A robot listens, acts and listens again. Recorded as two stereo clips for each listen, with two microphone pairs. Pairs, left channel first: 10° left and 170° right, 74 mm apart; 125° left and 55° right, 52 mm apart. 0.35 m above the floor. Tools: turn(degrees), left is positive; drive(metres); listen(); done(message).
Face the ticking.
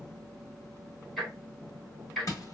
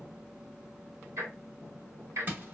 turn(degrees=-80)
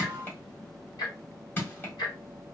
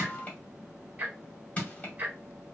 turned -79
done("Found it: ticking, straight ahead, 1 to 2 m away.")